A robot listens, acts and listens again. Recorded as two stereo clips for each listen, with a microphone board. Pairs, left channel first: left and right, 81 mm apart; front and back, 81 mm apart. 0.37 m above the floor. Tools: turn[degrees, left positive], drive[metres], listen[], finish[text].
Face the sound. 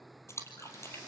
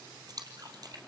Thought: The splash: 145° left.
Action: turn[145]
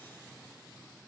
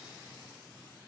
Action: finish[I heard a splash from this way, but can't make it out now.]